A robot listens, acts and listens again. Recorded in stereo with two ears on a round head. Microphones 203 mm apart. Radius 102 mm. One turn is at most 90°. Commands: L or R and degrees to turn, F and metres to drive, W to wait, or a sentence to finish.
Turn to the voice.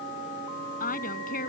L40
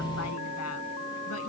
W
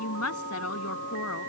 L90
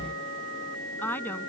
L10
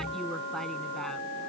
W
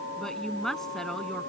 Facing the woman speaking.